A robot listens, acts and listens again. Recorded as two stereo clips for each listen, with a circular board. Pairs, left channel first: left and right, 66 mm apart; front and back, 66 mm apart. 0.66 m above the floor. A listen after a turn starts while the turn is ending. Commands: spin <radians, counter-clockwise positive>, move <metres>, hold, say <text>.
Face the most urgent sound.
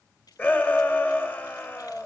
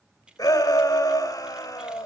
spin 0.52
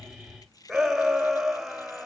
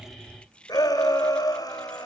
say Found it: a shout, straight ahead, 2 to 4 m away.